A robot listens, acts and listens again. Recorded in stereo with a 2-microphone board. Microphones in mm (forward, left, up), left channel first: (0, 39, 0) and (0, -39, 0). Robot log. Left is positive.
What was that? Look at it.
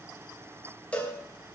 note: The cowbell: about 15° left or 165° left.
cmd yaw +15
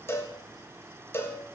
note: So it is at 150° left.
cmd yaw +150
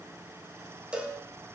note: The cowbell is now 15° right.
cmd yaw -15
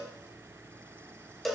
end: Found it: a cowbell, straight ahead, 1 to 2 m away.